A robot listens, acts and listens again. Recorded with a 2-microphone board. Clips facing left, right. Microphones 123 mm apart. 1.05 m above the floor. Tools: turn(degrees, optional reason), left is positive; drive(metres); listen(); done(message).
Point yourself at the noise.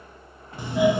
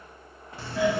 turn(degrees=20, reason="The doorbell: about 20° left or 160° left.")
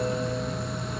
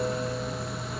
done("Facing the doorbell.")